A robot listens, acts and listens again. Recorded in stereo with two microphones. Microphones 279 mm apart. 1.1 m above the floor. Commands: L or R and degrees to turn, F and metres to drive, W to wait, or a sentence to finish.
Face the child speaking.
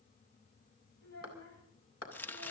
L70
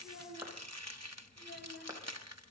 L45
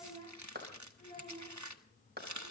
L20
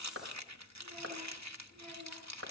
W
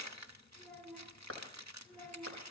Facing the child speaking, over 4 m away.